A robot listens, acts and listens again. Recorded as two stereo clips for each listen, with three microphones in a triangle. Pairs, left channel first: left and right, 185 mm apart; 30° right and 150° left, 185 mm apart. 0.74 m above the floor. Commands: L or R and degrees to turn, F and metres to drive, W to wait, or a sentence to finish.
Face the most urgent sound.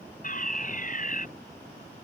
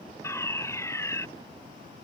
L45
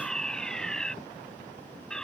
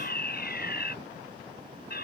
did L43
Facing the fire alarm.